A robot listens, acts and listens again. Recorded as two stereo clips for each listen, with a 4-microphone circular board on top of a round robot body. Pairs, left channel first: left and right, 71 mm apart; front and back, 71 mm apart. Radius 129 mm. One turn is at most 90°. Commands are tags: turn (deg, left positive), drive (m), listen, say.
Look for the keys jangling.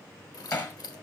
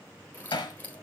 <turn deg="70"/>
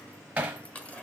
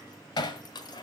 <turn deg="15"/>
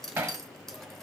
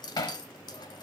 <say>Found it: keys jangling, straight ahead, 1 to 2 m away.</say>